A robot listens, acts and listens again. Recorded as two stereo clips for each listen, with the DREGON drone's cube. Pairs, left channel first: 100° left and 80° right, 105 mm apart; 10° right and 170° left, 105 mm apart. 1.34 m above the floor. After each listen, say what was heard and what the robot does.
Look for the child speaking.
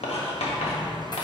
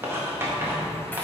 Keep listening.
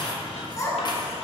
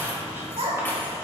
The child speaking: 160° left. Turn 160° left.
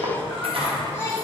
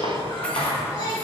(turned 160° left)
The child speaking is now 35° left. Turn 35° left.
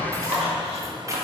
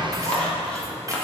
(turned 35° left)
Keep listening.
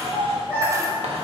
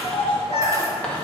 Found it: a child speaking, straight ahead.